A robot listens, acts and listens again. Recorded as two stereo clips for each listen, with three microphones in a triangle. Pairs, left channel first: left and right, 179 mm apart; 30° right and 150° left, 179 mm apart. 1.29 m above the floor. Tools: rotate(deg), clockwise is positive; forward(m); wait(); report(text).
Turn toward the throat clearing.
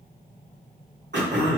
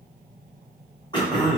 rotate(95)
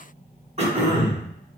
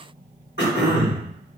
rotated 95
rotate(35)
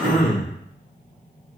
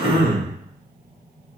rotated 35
report("Found it: throat clearing, straight ahead.")